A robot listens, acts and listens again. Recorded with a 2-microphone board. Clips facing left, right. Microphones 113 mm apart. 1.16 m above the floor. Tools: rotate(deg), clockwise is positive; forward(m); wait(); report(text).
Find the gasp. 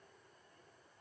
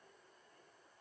wait()
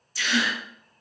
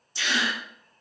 rotate(25)
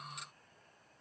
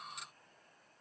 wait()
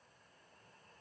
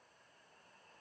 report("I heard a gasp, but can't make it out now. It was about straight ahead or 130° right.")